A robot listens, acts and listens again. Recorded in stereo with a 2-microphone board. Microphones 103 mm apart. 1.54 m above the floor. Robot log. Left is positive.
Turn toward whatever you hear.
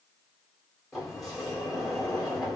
cmd yaw +30
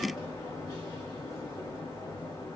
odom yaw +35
note: So it is at 145° left.
cmd yaw +145
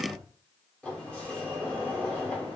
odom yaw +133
note: The sliding door is now 10° left.
cmd yaw +10
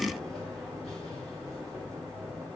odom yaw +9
end: Facing the sliding door.